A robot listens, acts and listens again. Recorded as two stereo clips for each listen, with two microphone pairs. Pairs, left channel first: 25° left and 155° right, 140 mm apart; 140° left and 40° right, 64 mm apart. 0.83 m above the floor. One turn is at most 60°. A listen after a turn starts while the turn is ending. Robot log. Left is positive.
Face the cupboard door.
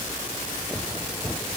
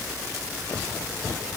cmd idle
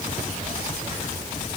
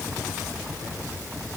cmd idle
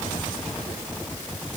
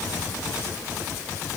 end: I can't make out a cupboard door to turn to.